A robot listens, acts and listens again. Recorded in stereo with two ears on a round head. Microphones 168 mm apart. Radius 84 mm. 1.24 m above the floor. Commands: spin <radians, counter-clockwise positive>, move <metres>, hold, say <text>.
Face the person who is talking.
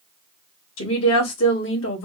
spin 1.57
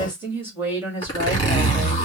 spin -0.17
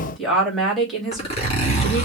say Facing the woman speaking, 2 to 4 m away.